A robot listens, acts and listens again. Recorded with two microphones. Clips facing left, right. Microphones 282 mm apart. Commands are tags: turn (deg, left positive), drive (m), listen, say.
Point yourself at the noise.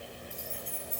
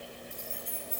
<turn deg="55"/>
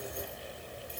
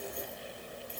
<listen/>
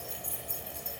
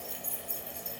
<say>Found it: keys jangling, straight ahead.</say>